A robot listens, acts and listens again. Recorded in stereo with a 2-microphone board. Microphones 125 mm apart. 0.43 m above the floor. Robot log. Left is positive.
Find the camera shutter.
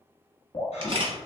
note: The camera shutter: about 50° right or 130° right.
cmd yaw -50
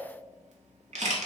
note: So it is at 80° right.
cmd yaw -80
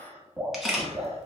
end: Facing the camera shutter, 1 to 2 m away.